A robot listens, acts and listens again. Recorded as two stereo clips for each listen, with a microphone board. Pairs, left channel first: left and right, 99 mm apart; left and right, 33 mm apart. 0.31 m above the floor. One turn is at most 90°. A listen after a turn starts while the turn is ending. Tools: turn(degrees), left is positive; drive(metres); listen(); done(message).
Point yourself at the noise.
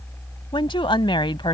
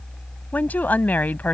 turn(degrees=55)
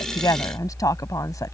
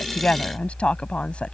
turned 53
turn(degrees=45)
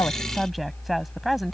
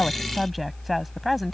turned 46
done("Facing the woman speaking.")